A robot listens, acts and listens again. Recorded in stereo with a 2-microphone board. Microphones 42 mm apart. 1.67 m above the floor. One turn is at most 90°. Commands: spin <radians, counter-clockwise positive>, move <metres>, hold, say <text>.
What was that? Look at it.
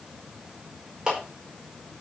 spin -0.52
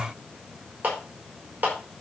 spin -1.57
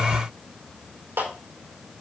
spin -1.40
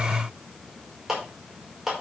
spin -0.17
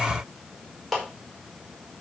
say Facing the clap, over 4 m away.